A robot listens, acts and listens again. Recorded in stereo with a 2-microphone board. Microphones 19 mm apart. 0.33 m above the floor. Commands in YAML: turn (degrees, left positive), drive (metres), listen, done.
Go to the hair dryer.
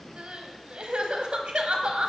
listen: true
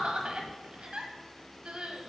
listen: true
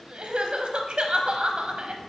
done: "I can't make out a hair dryer, only crying."